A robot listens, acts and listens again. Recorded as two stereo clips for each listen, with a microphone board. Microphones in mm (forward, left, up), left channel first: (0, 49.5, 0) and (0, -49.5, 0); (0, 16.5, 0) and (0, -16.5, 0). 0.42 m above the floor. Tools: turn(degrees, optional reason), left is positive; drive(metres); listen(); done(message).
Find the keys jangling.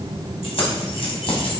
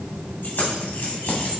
turn(degrees=65, reason="The keys jangling: about 65° left or 115° left.")
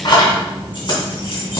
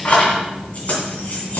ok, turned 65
turn(degrees=55, reason="So it is at 55° left.")
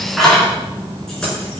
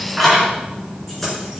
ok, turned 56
done("Found it: keys jangling, straight ahead, over 4 m away.")